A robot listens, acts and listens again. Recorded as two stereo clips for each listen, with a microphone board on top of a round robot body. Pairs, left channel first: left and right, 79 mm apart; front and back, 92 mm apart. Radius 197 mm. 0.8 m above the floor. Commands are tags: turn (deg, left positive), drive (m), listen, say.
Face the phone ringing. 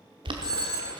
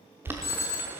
<turn deg="-55"/>
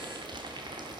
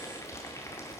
<listen/>
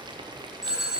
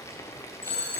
<say>Facing the phone ringing, 2 to 4 m away.</say>